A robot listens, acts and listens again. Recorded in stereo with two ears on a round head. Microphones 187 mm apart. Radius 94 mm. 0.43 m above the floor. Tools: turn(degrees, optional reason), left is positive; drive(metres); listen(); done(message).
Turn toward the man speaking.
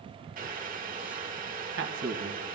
turn(degrees=-60, reason="The man speaking: about 60° right or 120° right.")
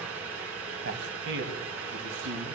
turn(degrees=-65, reason="So it is at 65° right.")
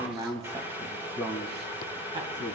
turn(degrees=-20, reason="The man speaking is now 20° right.")
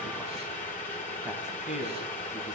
done("Facing the man speaking.")